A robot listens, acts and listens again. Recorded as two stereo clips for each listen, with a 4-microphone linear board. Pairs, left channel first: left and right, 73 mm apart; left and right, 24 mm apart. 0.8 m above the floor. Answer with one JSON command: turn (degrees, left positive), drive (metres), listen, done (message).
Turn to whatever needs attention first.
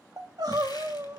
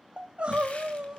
{"turn": -60}
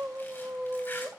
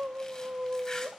{"turn": -35}
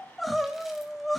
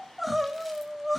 {"done": "Found it: crying, straight ahead, 1 to 2 m away."}